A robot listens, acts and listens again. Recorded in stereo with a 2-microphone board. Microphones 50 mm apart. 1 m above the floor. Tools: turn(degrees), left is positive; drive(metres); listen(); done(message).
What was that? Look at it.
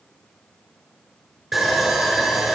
turn(degrees=-30)
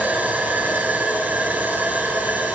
turn(degrees=-145)
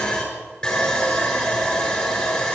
turn(degrees=15)
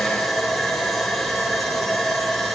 done("Found it: sawing, straight ahead, over 4 m away.")